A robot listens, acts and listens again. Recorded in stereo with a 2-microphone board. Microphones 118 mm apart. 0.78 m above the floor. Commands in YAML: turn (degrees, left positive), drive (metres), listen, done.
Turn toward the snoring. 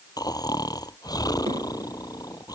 turn: 30
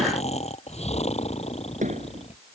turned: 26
turn: 120
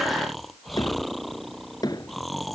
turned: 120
done: "Found it: snoring, straight ahead."